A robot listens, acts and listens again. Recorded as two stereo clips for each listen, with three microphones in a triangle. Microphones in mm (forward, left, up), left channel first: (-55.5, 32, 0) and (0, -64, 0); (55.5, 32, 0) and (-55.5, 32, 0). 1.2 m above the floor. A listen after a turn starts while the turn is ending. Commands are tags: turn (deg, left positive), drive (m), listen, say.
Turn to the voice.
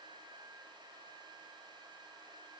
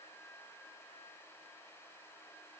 <listen/>
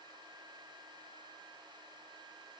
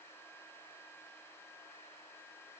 <listen/>
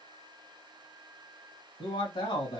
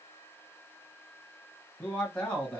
<turn deg="80"/>
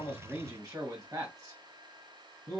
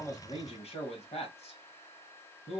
<say>Found it: a man speaking, straight ahead, 1 to 2 m away.</say>